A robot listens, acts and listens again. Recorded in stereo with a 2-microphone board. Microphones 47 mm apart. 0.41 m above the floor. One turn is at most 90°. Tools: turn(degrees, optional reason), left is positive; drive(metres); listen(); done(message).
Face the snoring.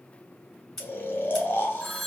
turn(degrees=45, reason="The snoring: about 45° left or 135° left.")
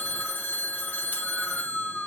done("Found it: snoring, straight ahead.")